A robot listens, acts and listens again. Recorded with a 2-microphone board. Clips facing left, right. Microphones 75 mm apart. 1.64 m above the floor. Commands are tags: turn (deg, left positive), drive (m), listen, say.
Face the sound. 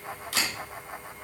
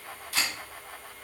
<turn deg="70"/>
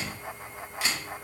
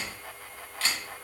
<turn deg="15"/>
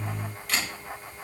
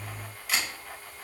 <say>Found it: a camera shutter, straight ahead, 2 to 4 m away.</say>